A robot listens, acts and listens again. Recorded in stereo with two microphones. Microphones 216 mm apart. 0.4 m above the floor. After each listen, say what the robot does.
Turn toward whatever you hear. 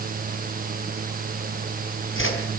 Turn 60° left.
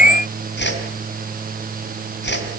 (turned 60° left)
Turn 55° left.
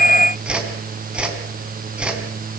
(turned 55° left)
Facing the whoosh, 2 to 4 m away.